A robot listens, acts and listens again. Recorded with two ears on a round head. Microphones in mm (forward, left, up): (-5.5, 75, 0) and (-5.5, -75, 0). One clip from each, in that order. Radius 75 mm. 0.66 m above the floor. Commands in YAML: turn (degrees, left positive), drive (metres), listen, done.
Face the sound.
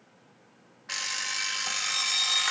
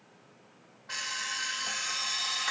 turn: 65
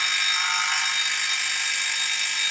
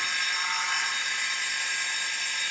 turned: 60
turn: 55
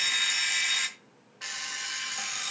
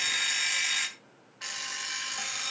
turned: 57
done: "Facing the alarm clock, 1 to 2 m away."